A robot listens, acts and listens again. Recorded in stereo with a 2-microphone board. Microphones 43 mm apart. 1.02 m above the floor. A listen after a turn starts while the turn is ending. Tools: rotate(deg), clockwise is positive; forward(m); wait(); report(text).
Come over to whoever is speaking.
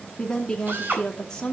rotate(-20)
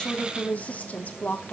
rotate(-140)
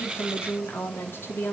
rotate(-60)
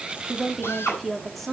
forward(1.0)
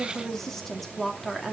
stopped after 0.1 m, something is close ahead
report("Something is in my way. I am facing the woman speaking but have not reached it.")